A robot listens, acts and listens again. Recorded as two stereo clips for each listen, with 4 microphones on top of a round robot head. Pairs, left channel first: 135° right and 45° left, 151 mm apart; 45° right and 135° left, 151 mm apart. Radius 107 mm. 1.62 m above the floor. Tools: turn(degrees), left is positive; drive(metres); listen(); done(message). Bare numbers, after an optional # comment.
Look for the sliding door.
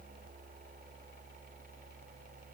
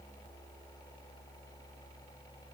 listen()
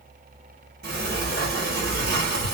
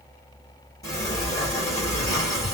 # The sliding door: 20° left.
turn(20)
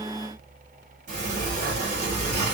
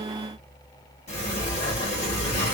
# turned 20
done("Facing the sliding door, 1 to 2 m away.")